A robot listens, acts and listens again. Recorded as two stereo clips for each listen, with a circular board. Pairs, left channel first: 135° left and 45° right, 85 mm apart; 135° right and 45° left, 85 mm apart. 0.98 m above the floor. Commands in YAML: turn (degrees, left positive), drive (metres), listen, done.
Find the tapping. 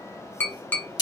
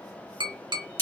turn: 70
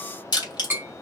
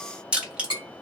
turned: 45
turn: 25
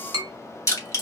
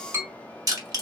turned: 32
turn: -10
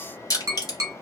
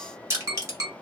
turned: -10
done: "Found it: tapping, straight ahead."